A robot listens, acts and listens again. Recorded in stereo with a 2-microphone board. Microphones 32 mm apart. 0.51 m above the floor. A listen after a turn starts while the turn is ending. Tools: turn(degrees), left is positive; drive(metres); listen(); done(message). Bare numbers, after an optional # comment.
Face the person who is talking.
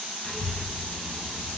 # The child speaking: about 25° left or 155° left.
turn(25)
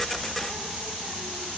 done("Found it: a child speaking, straight ahead.")